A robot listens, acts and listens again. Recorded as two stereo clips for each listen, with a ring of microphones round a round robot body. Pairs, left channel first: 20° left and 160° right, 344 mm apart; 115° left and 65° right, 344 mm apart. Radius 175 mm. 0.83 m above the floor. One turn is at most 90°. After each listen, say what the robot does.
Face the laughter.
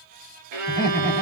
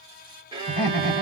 Turn 90° left.
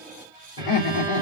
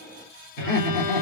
Turn 60° left.
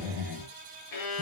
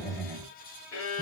Facing the laughter, 2 to 4 m away.